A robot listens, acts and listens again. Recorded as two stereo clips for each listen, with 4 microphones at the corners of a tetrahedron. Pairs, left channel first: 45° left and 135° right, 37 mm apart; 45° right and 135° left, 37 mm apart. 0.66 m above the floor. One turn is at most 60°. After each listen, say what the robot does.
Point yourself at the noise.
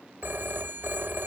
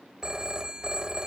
Turn 60° right.
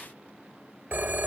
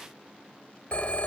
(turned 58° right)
Turn 60° right.
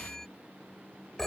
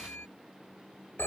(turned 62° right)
Turn 35° right.
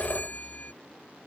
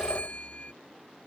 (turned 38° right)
Found it: a phone ringing, straight ahead.